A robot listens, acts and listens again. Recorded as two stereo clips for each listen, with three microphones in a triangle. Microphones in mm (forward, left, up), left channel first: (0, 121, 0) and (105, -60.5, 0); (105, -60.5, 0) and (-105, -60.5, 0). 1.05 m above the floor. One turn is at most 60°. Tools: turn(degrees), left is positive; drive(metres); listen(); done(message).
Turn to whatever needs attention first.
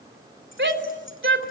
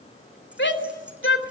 turn(degrees=-30)
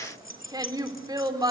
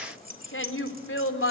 turn(degrees=10)
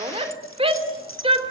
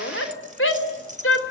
done("Found it: a shout, straight ahead, 2 to 4 m away.")